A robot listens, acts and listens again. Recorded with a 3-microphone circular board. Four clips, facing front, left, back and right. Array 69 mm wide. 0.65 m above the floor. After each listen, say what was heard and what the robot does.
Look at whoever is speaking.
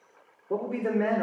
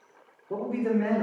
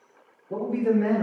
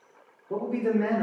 The man speaking: 10° right. Turn 10° right.
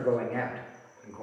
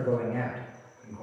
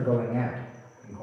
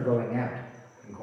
The man speaking is now 20° right. Turn 20° right.
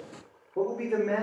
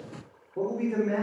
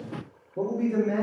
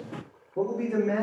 The man speaking is now 10° right. Turn 10° right.
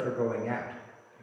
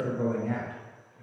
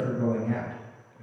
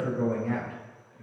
The man speaking is now 10° right. Turn 10° right.
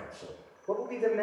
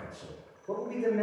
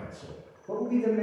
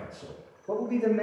The man speaking is now 10° right. Turn 10° right.
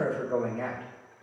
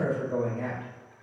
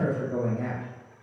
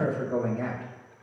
Facing the man speaking, 2 to 4 m away.